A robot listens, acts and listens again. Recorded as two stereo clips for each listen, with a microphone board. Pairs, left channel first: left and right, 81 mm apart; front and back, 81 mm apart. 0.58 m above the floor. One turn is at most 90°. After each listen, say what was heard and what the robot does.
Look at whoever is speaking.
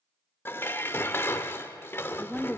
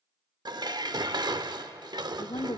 The woman speaking: 10° left. Turn 10° left.
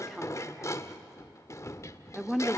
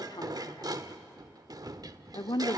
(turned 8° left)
Facing the woman speaking.